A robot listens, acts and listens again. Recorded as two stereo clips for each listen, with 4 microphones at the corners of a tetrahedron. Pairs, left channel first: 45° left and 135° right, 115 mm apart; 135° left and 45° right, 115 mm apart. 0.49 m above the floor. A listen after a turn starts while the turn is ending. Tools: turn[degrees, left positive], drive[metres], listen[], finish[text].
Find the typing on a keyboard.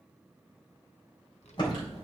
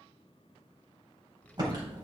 Action: finish[Found it: typing on a keyboard, straight ahead, 2 to 4 m away.]